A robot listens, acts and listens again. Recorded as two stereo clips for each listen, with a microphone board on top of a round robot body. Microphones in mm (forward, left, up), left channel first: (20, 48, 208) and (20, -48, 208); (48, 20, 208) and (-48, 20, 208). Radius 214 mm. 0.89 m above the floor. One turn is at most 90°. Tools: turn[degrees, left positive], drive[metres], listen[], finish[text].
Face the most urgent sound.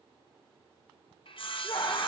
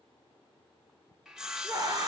Thought: The scream: 130° left.
Action: turn[90]
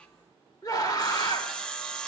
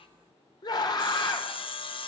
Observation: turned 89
Thought: The scream is now 45° left.
Action: turn[45]
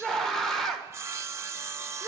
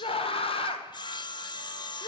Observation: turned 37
Action: finish[Found it: a scream, straight ahead, 1 to 2 m away.]